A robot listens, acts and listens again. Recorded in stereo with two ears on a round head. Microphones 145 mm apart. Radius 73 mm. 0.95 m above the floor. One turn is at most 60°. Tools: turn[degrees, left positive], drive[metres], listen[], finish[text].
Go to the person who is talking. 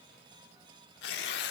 Action: listen[]
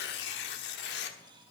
Action: listen[]
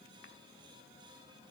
Action: finish[I can't make out anyone speaking, only tearing paper.]